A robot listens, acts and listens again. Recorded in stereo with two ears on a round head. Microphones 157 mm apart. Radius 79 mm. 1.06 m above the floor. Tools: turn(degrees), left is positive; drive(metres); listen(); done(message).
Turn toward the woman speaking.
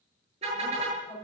turn(degrees=30)
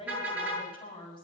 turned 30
turn(degrees=150)
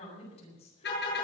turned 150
turn(degrees=35)
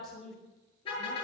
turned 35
done("Facing the woman speaking.")